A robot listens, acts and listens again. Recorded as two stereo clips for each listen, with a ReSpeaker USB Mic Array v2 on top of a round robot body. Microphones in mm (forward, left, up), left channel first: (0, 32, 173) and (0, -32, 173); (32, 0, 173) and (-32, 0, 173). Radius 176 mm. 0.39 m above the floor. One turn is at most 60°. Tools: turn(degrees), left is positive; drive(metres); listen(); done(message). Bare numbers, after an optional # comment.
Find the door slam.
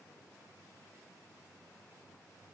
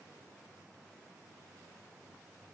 listen()
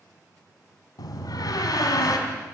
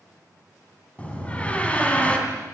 # The door slam: 70° left.
turn(60)
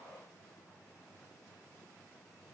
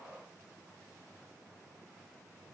# Nothing new. It was at 10° left.
turn(10)
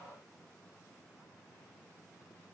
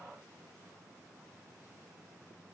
done("Facing where the door slam came from. I can't hear it now.")